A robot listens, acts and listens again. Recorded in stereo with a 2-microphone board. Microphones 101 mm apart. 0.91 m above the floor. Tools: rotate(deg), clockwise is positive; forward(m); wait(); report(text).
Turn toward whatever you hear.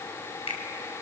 rotate(-90)
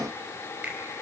rotate(15)
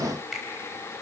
report("Found it: a finger snap, straight ahead.")